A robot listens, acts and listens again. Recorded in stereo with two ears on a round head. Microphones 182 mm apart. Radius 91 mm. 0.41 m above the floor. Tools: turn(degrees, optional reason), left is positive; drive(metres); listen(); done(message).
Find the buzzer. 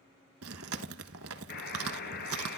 turn(degrees=55, reason="The buzzer: about 55° left or 125° left.")
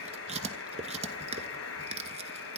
turn(degrees=70, reason="So it is at 70° left.")
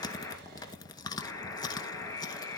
turn(degrees=15, reason="The buzzer is now 15° left.")
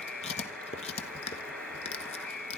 done("Facing the buzzer, 2 to 4 m away.")